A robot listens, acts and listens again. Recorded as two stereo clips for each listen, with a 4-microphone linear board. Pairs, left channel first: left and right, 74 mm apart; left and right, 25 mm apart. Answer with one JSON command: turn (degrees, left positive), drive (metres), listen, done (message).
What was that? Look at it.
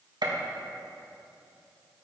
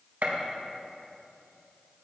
{"turn": -70}
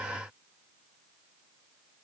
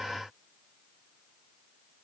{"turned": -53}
{"listen": true}
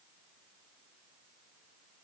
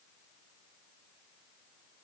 {"done": "I heard a gunshot, but can't make it out now. It was about 20° right or 55° right."}